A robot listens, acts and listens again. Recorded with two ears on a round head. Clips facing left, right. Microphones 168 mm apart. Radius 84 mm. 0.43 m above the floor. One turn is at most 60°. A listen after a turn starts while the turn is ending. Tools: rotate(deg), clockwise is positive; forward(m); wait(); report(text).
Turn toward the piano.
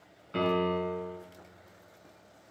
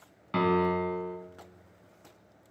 rotate(60)
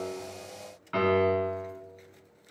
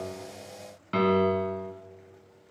rotate(45)
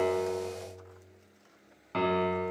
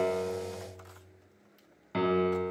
rotate(10)
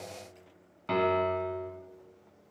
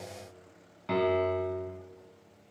report("Facing the piano.")